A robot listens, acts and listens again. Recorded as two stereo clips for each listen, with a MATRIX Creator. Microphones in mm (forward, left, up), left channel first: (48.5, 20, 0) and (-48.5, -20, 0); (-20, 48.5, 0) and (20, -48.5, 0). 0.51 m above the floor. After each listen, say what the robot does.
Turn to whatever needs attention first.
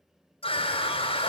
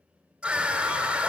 Turn 15° left.
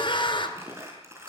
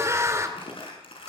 Facing the scream, 2 to 4 m away.